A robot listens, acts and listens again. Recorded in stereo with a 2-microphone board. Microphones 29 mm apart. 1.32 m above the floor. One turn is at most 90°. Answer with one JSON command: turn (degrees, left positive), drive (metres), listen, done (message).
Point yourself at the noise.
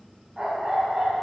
{"turn": -25}
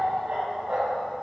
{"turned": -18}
{"turn": -45}
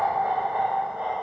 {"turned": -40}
{"turn": -90}
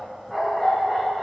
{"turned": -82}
{"done": "Found it: a dog barking, straight ahead."}